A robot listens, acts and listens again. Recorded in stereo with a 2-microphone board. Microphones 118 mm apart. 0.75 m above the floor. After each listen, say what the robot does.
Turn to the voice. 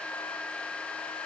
Keep listening.
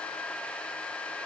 Keep listening.
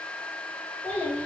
Turn 30° left.
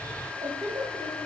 Turn 30° right.
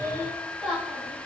Facing the child speaking, 2 to 4 m away.